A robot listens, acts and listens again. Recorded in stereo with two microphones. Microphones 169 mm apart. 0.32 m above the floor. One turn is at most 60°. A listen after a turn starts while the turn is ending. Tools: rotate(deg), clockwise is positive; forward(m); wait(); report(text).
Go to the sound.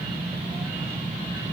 wait()
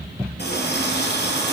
rotate(-60)
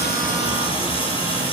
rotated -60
rotate(-30)
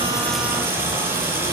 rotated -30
rotate(15)
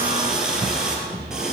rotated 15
forward(1.0)
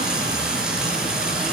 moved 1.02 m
forward(1.0)
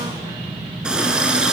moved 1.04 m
forward(1.0)
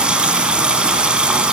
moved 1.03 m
forward(1.0)
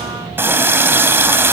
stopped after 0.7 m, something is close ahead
rotate(15)
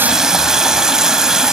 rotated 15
report("I am next to the running tap.")